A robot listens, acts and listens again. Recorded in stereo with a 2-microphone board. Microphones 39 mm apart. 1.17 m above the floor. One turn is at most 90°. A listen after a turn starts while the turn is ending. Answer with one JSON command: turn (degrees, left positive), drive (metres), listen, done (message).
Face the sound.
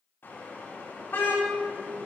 {"turn": 65}
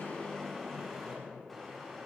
{"done": "Facing the car horn."}